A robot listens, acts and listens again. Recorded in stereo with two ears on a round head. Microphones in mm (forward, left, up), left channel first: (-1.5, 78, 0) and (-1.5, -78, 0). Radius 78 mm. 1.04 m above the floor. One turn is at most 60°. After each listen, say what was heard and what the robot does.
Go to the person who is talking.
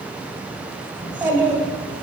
Turn 30° right.
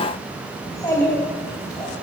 So it is at 20° left. Turn 20° left.
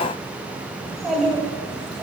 Drive 1.0 m forward.
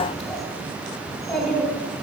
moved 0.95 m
Drive 1.0 m forward.
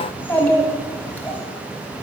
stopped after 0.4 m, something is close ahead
The child speaking is now 10° left. Turn 10° left.
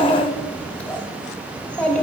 The child speaking is now 10° left. Turn 10° left.
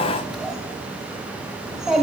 Arrived at the child speaking, straight ahead.